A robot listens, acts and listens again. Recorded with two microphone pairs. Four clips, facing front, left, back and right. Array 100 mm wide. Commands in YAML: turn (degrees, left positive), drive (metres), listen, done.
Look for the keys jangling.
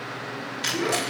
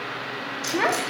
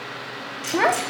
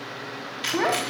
done: "Found it: keys jangling, straight ahead."